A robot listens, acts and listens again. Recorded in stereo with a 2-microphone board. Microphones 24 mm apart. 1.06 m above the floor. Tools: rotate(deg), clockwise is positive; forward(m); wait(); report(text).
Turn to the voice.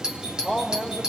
rotate(70)
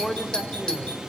report("Facing the man speaking.")